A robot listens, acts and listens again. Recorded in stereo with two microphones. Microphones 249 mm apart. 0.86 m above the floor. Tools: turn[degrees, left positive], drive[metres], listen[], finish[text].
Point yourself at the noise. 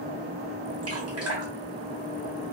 Thought: The dripping: about 70° right or 110° right.
Action: turn[-70]
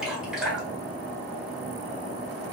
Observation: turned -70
Action: finish[Facing the dripping, 1 to 2 m away.]